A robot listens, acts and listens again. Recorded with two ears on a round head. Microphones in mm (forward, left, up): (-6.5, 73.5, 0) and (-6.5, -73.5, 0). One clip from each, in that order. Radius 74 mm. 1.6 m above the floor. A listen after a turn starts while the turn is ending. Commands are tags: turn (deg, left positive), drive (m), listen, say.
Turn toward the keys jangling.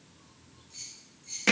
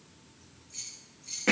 <turn deg="-20"/>
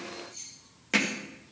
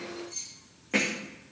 <turn deg="-40"/>
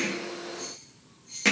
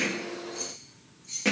<turn deg="-100"/>
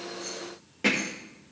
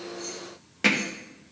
<listen/>
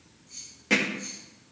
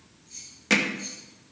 <turn deg="-10"/>
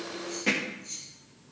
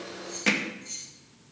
<say>Facing the keys jangling, over 4 m away.</say>